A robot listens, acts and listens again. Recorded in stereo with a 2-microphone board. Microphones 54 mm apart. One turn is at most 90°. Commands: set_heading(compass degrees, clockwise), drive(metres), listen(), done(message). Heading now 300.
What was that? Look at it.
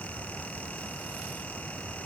listen()
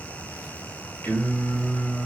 set_heading(270)
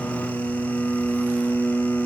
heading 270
set_heading(180)
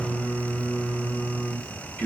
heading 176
set_heading(146)
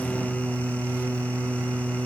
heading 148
done("Facing the singing.")